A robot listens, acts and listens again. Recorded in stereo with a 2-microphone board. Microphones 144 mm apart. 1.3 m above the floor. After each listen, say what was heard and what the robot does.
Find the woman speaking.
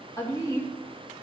The woman speaking: about 25° left or 155° left. Turn 25° left.
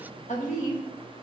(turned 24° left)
So it is at 120° left. Turn 120° left.
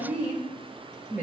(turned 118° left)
The woman speaking is now 15° right. Turn 15° right.
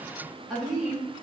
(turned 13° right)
Facing the woman speaking, 2 to 4 m away.